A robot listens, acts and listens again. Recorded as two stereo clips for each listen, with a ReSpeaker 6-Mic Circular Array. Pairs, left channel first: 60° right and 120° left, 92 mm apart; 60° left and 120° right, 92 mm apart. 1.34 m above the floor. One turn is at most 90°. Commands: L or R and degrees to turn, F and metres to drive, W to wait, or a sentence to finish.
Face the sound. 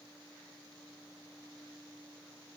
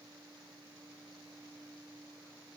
W
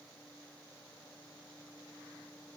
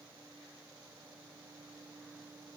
W
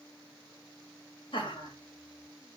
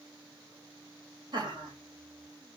R90
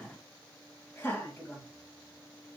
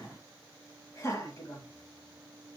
Found it: laughter, straight ahead.